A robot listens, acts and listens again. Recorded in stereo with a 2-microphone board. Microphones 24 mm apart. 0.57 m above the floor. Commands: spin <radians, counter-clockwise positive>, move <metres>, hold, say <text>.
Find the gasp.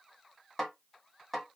hold
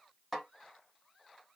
hold
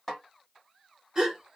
spin -0.52
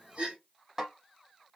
spin -2.09
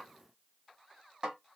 say I heard a gasp from this way, but can't make it out now.